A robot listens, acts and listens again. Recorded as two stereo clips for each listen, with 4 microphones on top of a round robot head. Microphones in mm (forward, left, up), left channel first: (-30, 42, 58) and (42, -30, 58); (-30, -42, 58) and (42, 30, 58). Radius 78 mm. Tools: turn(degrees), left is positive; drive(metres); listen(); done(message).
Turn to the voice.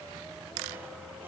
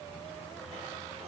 listen()
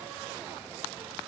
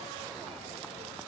listen()
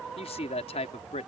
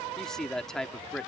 turn(degrees=140)
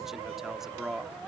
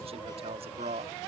turn(degrees=40)
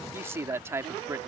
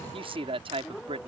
turn(degrees=20)
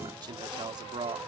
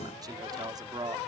done("Found it: a man speaking, straight ahead.")